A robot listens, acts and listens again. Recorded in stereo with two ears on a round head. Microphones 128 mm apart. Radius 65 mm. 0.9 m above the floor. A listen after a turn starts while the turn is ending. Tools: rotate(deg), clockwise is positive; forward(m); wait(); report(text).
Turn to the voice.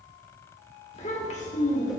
rotate(-60)
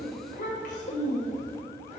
rotate(-50)
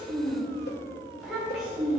report("Facing the child speaking, 2 to 4 m away.")